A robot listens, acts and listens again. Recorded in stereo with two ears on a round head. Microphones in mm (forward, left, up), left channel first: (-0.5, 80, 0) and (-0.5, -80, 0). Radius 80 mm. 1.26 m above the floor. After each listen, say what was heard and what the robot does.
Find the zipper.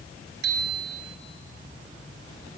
Keep listening.
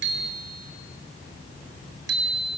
Keep listening.
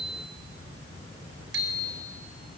I can't make out a zipper, only a bicycle bell.